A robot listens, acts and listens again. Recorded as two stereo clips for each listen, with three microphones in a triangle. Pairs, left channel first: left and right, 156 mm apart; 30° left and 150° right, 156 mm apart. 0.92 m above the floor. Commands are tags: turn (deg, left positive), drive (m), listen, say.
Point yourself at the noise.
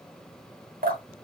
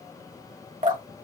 <turn deg="-115"/>
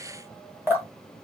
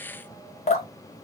<turn deg="-15"/>
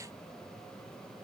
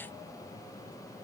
<listen/>
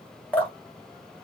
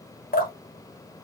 <turn deg="10"/>
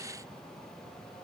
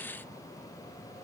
<listen/>
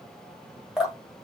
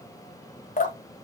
<say>Found it: dripping, straight ahead.</say>